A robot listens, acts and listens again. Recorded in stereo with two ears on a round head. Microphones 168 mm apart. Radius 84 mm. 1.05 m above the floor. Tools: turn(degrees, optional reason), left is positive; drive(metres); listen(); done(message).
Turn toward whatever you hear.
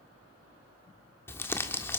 turn(degrees=30)
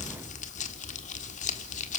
turn(degrees=140, reason="So it is at 140° left.")
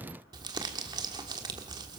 turn(degrees=-20, reason="The crumpling is now 20° right.")
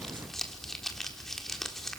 done("Facing the crumpling.")